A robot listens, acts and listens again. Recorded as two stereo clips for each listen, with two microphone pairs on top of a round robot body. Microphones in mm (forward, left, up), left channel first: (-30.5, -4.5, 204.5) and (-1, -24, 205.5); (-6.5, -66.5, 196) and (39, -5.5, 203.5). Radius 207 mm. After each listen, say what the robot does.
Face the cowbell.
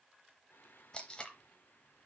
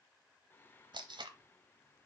Keep listening.
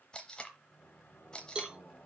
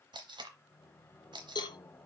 Turn 95° right.
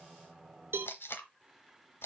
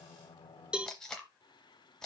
Turn 25° right.
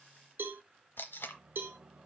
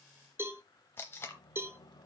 Found it: a cowbell, straight ahead, under 1 m away.